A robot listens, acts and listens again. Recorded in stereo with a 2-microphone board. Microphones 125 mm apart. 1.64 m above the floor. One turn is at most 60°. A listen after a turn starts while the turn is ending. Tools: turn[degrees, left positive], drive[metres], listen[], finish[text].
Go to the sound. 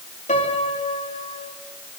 Thought: The piano: about 65° left or 115° left.
Action: turn[60]
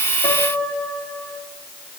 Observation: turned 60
Thought: So it is at 10° left.
Action: turn[10]
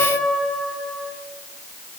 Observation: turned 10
Action: drive[1.0]
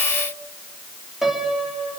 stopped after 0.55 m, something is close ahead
Action: finish[Something is in my way. I am facing the piano but have not reached it.]